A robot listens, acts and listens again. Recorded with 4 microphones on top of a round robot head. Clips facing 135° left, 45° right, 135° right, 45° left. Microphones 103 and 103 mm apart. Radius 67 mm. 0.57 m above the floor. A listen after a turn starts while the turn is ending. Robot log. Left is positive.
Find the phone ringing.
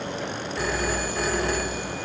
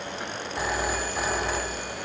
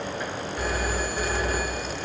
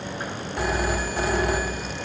note: The phone ringing: 30° left.
cmd yaw +30
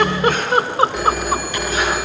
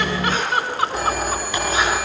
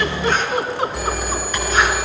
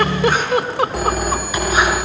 end: Facing the phone ringing, 2 to 4 m away.